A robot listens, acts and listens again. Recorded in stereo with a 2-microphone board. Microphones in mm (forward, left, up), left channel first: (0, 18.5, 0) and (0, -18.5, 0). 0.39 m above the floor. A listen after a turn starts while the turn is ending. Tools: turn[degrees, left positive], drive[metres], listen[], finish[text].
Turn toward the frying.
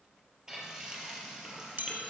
Thought: The frying: about 20° right or 160° right.
Action: turn[-20]
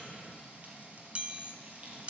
Thought: So it is at 140° right.
Action: turn[-140]
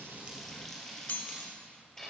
Thought: The frying is now 10° left.
Action: turn[10]
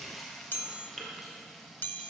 Action: finish[Found it: frying, straight ahead, 2 to 4 m away.]